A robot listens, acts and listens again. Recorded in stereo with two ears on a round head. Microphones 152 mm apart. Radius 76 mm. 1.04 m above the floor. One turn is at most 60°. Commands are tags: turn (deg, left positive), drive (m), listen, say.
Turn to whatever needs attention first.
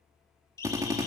<turn deg="20"/>
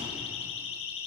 <turn deg="60"/>
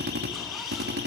<turn deg="60"/>
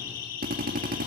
<turn deg="60"/>
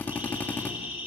<turn deg="-10"/>
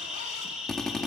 <say>Found it: a siren, straight ahead.</say>